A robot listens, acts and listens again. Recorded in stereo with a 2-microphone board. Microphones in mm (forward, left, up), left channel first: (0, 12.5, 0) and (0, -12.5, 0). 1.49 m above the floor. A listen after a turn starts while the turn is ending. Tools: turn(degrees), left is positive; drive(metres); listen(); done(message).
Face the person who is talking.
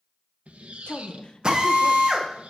turn(degrees=50)
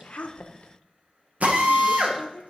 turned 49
turn(degrees=80)
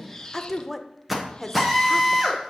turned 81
done("Facing the woman speaking.")